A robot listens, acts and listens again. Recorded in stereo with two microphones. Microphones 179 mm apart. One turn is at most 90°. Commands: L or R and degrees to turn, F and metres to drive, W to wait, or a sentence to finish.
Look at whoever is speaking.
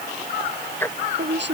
R90
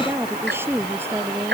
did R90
R10
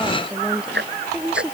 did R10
Facing the woman speaking.